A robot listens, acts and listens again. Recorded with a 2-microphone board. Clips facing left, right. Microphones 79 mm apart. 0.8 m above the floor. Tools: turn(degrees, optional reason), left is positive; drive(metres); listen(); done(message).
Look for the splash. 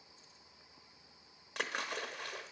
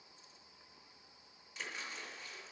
turn(degrees=65, reason="The splash: about 65° left or 115° left.")
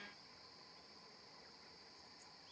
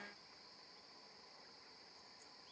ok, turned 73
listen()
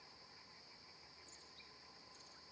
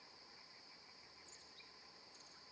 done("I heard a splash, but can't make it out now. It was about 10° right or 45° left.")